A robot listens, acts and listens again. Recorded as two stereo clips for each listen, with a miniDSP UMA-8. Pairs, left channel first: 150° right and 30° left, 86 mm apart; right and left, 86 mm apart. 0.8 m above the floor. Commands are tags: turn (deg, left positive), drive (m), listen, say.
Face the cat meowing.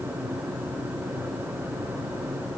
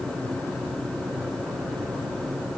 <listen/>
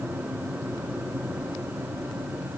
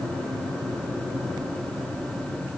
<listen/>
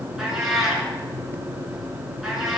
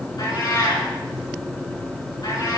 <turn deg="-55"/>
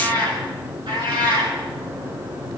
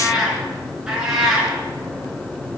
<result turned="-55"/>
<say>Facing the cat meowing.</say>